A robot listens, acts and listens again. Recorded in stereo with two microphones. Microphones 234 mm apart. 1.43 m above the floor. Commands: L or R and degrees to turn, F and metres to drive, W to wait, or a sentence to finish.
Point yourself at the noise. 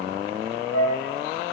L90
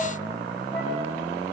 W
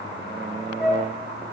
Found it: a flute, straight ahead, over 4 m away.